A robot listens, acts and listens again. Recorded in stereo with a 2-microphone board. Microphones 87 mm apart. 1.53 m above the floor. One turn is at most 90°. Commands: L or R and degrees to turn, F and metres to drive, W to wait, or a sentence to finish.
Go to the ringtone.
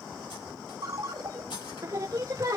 R50
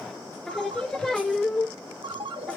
R80
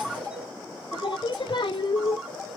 R10
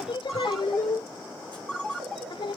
F1.0
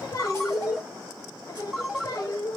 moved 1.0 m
F1.0
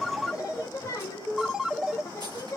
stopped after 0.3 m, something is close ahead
I am next to the ringtone.